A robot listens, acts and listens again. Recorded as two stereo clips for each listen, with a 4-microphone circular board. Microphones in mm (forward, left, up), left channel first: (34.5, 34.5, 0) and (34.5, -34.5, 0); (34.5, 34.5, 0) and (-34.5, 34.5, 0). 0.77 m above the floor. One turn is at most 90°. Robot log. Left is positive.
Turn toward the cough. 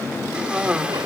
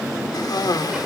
note: The cough: 15° right.
cmd yaw -15
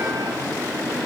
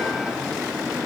cmd idle
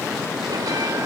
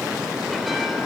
cmd idle
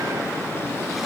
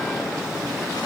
end: I heard a cough from this way, but can't make it out now.